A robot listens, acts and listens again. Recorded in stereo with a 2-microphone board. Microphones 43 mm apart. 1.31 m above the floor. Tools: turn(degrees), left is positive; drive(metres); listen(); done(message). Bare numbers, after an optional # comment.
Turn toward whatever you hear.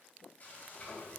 # The frying: about 40° left or 140° left.
turn(40)
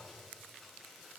done("Found it: frying, straight ahead.")